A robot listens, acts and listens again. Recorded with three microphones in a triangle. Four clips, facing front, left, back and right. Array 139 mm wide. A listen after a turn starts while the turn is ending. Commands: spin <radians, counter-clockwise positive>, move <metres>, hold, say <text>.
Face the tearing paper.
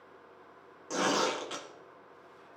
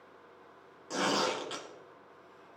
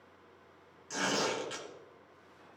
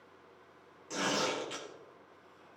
spin 0.35
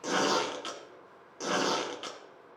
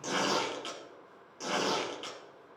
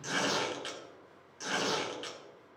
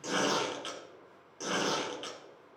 say Facing the tearing paper, 1 to 2 m away.